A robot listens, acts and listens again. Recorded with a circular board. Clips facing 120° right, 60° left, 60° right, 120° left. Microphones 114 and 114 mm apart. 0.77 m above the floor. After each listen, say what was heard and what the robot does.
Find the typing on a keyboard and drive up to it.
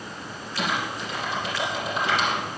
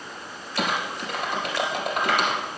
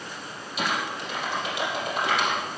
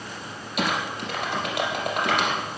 The typing on a keyboard: 95° left. Turn 95° left.
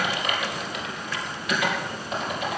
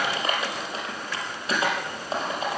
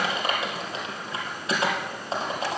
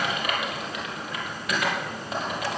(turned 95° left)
Drive 1.0 m forward.
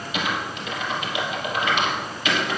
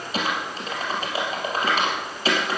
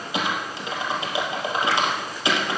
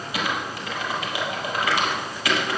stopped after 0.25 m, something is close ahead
Blocked. The typing on a keyboard is further on, straight ahead.